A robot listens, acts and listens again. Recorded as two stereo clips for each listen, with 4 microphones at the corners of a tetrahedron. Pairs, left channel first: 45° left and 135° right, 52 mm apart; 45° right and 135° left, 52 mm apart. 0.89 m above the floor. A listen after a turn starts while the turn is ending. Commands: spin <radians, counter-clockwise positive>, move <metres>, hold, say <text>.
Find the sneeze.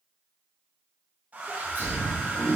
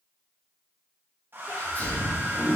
spin -1.57
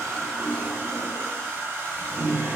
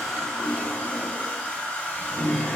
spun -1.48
say I heard a sneeze from this way, but can't make it out now.